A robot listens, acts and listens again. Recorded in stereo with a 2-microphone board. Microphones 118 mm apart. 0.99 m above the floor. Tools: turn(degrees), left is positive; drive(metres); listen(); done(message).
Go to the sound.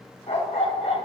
turn(degrees=65)
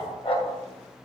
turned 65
turn(degrees=45)
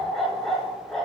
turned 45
drive(metres=1.0)
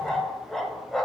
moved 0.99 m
drive(metres=1.0)
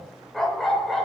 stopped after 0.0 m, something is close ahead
done("I am next to the dog barking.")